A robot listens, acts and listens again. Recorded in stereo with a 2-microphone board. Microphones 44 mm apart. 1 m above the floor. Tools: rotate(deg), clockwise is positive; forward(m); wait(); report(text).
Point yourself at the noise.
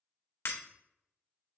rotate(-75)
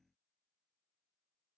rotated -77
wait()
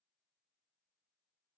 report("I heard breaking glass, but can't make it out now. It was about 5° right or 30° left.")